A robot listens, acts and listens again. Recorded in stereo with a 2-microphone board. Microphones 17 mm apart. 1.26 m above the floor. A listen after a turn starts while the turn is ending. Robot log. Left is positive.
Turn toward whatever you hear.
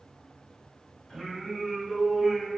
note: The singing: about 50° left or 130° left.
cmd yaw +50
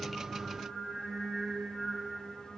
note: So it is at 80° left.
cmd yaw +80
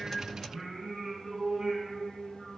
end: Facing the singing, over 4 m away.